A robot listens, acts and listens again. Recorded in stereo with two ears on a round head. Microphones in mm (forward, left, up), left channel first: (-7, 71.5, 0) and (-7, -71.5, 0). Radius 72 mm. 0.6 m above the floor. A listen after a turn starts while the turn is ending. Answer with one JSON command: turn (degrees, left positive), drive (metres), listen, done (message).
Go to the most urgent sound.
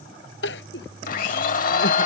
{"turn": 90}
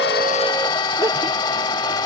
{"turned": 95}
{"listen": true}
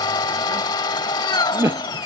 {"turn": -15}
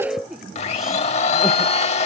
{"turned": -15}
{"drive": 1.0}
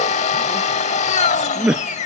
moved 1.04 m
{"drive": 1.0}
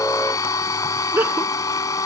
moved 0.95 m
{"turn": -15}
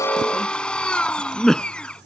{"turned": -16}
{"drive": 1.0}
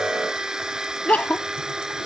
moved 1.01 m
{"turn": 10}
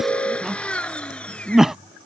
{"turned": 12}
{"drive": 1.0}
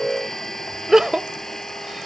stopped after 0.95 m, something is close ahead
{"done": "Arrived at the crying, straight ahead."}